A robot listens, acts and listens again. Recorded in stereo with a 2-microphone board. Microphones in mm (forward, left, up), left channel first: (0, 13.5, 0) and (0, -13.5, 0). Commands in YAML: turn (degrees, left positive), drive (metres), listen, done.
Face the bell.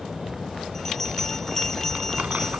turn: 20
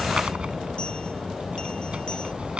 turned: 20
listen: true
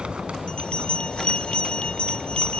turn: 140
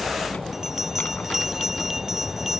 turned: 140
turn: -15
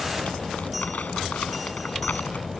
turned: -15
listen: true
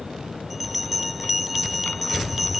done: "Found it: a bell, straight ahead."